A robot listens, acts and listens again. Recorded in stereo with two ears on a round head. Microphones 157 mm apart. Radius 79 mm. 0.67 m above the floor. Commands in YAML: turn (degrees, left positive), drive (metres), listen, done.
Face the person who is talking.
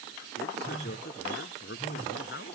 turn: 65
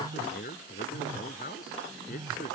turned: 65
turn: 50
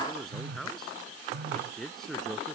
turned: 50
done: "Facing the man speaking."